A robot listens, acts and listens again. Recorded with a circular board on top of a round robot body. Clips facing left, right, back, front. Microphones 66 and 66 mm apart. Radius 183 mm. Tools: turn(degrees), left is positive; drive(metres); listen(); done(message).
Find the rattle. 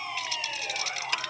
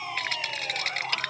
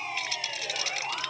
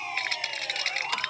turn(degrees=-45)
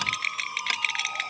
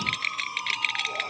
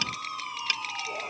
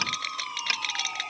done("Found it: a rattle, straight ahead.")